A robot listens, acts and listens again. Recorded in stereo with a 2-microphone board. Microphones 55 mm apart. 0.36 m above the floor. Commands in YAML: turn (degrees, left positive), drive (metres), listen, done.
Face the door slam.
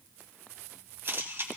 listen: true
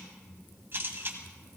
listen: true
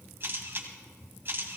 done: "I can't make out a door slam, only a camera shutter."